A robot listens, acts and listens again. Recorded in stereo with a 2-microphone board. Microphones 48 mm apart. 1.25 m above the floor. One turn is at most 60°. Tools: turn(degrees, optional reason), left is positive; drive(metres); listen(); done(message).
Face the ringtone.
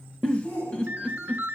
turn(degrees=-40, reason="The ringtone: about 40° right or 140° right.")
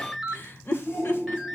done("Facing the ringtone, 1 to 2 m away.")